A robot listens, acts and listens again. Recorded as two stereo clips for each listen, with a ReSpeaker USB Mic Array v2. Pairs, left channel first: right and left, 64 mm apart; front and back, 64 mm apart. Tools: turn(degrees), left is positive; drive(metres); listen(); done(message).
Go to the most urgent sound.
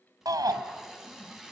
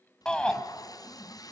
turn(degrees=75)
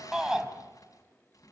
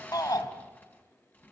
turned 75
turn(degrees=10)
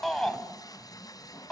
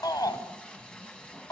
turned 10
drive(metres=1.0)
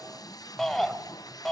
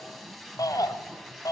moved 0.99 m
drive(metres=1.0)
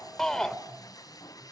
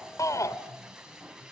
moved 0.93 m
turn(degrees=-10)
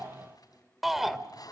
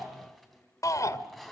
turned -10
drive(metres=1.0)
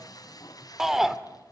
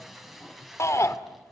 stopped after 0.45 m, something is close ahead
done("I am next to the shout.")